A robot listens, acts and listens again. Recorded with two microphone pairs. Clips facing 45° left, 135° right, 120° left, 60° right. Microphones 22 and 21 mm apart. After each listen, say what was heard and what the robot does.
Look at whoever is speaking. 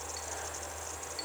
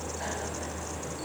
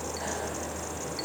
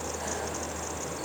Keep listening.
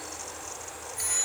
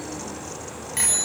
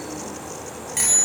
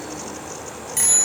Keep listening.
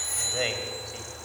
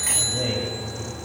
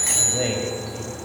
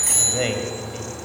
Found it: a man speaking, straight ahead, 2 to 4 m away.